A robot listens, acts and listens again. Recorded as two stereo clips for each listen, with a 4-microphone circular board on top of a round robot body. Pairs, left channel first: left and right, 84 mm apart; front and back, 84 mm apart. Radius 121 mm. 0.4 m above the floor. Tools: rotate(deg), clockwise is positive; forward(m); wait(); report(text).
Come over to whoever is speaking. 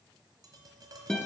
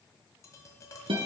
wait()
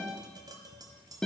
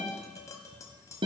wait()
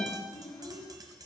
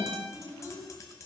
rotate(-75)
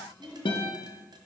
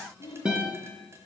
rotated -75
forward(1.0)
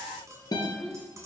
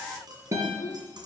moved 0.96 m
rotate(-10)
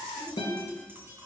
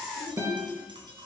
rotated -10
wait()
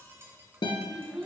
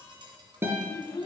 forward(1.0)
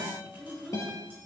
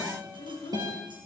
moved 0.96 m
forward(1.0)
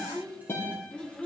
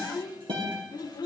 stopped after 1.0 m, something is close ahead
rotate(-10)
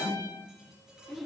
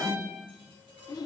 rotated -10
report("I am next to the child speaking.")